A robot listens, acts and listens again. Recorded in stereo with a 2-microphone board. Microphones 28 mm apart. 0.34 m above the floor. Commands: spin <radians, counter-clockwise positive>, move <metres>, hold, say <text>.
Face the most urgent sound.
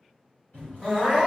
spin 0.52
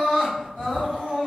spin 2.01
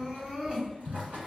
spin -0.52
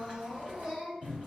say Found it: crying, straight ahead.